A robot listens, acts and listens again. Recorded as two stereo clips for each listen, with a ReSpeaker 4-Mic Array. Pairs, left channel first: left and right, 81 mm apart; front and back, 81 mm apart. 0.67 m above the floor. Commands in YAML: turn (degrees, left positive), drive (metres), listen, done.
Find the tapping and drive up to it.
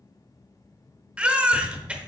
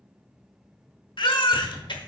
turn: -170
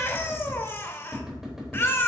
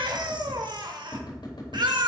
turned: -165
drive: 1.0
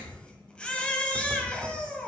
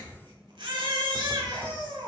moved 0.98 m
drive: 1.0
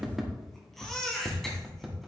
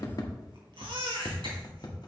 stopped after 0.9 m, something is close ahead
done: "Arrived at the tapping, straight ahead."